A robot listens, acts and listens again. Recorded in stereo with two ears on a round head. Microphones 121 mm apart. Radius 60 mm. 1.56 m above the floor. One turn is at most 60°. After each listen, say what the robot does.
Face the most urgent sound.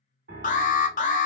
Turn 60° left.
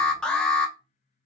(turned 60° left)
Found it: an alarm, straight ahead, under 1 m away.